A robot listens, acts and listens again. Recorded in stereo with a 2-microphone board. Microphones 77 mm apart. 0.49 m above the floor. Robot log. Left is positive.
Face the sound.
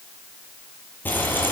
note: The frying: about 25° left or 155° left.
cmd yaw +25
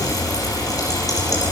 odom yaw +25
note: So it is at 130° left.
cmd yaw +130
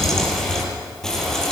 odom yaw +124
end: Facing the frying, over 4 m away.